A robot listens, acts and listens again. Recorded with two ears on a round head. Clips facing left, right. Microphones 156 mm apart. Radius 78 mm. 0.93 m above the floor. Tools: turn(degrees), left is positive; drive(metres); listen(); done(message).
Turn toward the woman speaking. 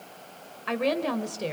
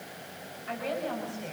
turn(degrees=90)
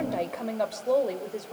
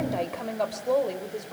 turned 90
turn(degrees=10)
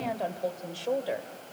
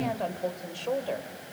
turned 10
turn(degrees=10)
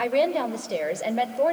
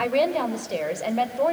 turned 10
turn(degrees=10)
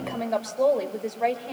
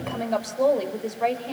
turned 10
done("Found it: a woman speaking, straight ahead, 2 to 4 m away.")